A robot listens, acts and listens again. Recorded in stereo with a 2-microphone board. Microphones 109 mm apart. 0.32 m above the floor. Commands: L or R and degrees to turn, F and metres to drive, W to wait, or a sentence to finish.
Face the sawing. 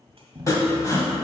L30
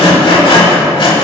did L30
L115
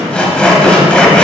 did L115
L10
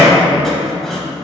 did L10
Found it: sawing, straight ahead.